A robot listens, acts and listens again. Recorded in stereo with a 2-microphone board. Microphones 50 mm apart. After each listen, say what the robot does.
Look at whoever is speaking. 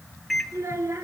Turn 60° right.
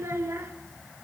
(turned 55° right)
Turn 65° right.
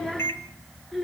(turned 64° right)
Found it: a child speaking, straight ahead.